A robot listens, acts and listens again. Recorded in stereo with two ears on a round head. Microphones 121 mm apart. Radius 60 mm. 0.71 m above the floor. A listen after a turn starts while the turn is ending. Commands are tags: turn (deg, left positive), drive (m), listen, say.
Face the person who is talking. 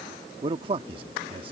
<turn deg="-40"/>
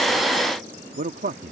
<turn deg="-90"/>
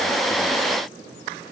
<listen/>
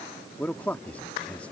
<turn deg="15"/>
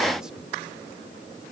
<listen/>
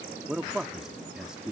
<say>Found it: a man speaking, straight ahead.</say>